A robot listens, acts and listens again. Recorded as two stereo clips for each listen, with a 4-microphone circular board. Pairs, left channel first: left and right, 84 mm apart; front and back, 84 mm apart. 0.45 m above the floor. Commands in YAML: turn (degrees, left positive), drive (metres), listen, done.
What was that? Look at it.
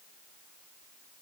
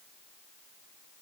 listen: true
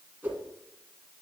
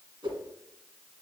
turn: -160
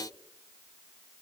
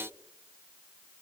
listen: true
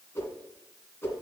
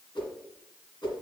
turn: 30
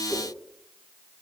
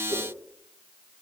listen: true
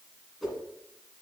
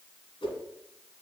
done: "Found it: a whoosh, straight ahead, 1 to 2 m away."